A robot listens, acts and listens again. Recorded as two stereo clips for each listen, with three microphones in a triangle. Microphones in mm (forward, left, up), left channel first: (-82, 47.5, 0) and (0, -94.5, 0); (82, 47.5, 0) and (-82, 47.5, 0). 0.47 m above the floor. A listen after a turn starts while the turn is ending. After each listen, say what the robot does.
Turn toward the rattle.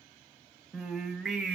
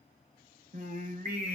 Keep listening.
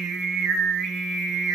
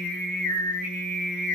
Keep listening.
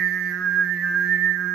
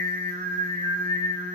I can't make out a rattle to turn to.